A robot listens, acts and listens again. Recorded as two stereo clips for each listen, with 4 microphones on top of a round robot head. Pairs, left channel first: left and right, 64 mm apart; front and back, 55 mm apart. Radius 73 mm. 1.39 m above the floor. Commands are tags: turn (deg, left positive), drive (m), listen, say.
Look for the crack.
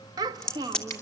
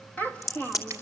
<turn deg="10"/>
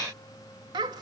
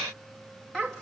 <say>I heard a crack from this way, but can't make it out now.</say>